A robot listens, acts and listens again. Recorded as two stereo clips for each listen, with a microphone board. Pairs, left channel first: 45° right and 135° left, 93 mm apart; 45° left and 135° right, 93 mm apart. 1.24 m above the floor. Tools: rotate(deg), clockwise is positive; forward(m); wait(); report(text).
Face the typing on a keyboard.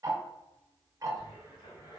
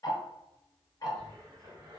wait()
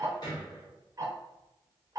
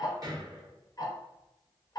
wait()
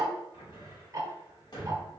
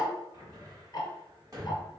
report("I can't make out typing on a keyboard, only ticking and a cupboard door.")